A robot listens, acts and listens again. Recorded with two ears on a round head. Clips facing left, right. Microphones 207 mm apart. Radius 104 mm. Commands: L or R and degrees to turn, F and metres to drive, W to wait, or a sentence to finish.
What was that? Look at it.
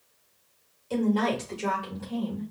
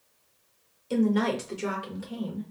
R30
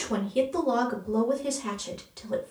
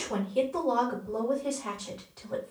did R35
L45
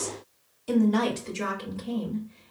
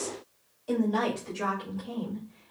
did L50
L35
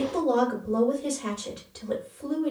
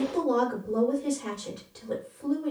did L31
Facing the woman speaking.